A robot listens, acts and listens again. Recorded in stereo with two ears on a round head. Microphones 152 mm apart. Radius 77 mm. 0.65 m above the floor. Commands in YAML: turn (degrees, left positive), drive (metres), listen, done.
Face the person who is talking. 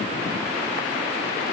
listen: true
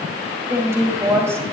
turn: -15
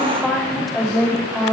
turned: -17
done: "Facing the woman speaking."